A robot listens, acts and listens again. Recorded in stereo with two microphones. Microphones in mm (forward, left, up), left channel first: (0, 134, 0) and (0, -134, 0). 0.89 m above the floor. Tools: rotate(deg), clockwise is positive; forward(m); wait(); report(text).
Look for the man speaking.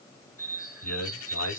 rotate(-90)
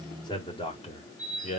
rotate(-25)
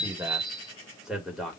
report("Found it: a man speaking, straight ahead.")